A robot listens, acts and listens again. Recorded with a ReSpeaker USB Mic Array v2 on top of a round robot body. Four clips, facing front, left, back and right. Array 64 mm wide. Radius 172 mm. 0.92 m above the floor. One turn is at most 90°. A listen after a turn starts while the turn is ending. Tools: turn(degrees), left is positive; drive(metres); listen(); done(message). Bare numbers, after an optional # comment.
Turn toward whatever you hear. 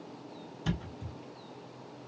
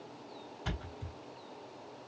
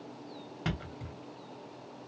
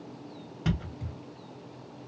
# The thud: 160° right.
turn(-90)
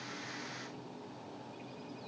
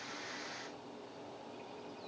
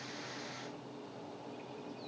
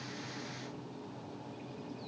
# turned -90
# Nothing new. It was at 70° right.
turn(-70)
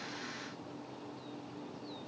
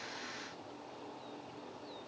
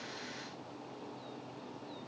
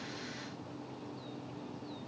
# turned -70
done("I heard a thud from this way, but can't make it out now.")